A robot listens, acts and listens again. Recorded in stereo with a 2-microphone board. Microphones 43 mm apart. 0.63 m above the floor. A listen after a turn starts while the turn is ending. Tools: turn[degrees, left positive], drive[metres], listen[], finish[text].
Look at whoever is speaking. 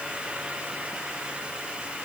Action: listen[]
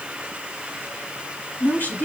Thought: The woman speaking: about 50° left or 130° left.
Action: turn[50]
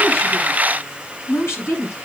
Thought: So it is at 80° left.
Action: turn[80]
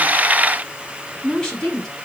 Thought: The woman speaking is now 10° left.
Action: turn[10]
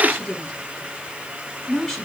Thought: The woman speaking is now 10° left.
Action: turn[10]
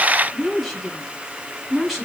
Action: finish[Facing the woman speaking.]